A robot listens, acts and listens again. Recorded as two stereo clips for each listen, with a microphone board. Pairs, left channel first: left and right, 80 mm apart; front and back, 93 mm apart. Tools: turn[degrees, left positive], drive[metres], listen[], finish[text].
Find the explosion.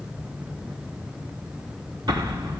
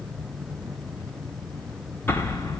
Thought: The explosion: 65° right.
Action: turn[-65]
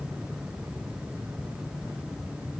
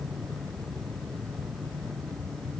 Action: finish[Facing where the explosion came from. I can't hear it now.]